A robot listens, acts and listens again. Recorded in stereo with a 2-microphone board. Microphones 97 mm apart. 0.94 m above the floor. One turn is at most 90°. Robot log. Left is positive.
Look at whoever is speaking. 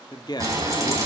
note: The man speaking: about 50° left or 130° left.
cmd yaw +50
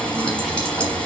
cmd idle
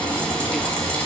cmd idle
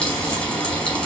end: I heard a man speaking, but can't make it out now. It was about straight ahead or 80° left.